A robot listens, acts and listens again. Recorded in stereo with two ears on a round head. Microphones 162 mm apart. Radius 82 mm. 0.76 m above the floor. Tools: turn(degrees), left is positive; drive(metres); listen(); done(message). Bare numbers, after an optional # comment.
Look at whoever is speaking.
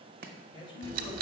# The man speaking: about 30° left or 150° left.
turn(30)
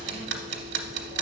listen()
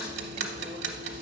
listen()
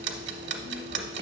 done("I heard a man speaking, but can't make it out now. It was about straight ahead or 120° left.")